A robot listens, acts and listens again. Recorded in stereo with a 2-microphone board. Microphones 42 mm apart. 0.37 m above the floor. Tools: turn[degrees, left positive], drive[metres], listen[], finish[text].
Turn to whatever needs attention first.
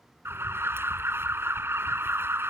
Thought: The alarm: about 70° right or 110° right.
Action: turn[-70]
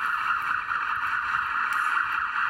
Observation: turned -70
Action: finish[Facing the alarm.]